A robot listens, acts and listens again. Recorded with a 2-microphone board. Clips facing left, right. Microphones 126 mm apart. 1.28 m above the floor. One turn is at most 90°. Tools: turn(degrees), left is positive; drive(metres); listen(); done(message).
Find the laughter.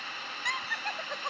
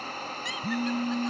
turn(degrees=60)
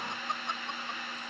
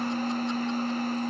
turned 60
listen()
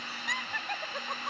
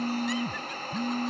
turn(degrees=65)
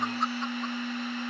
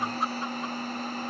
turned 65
listen()
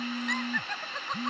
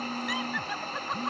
listen()
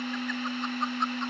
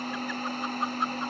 done("Facing where the laughter came from. I can't hear it now.")